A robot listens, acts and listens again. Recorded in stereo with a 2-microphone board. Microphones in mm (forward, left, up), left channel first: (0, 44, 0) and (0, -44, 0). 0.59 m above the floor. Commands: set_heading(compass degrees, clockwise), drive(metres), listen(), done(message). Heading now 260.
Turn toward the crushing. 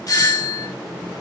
listen()
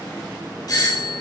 listen()
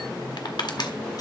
set_heading(195)
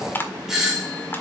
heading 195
set_heading(165)
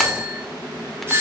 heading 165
listen()
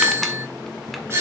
listen()
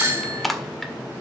done("Facing the crushing, 1 to 2 m away.")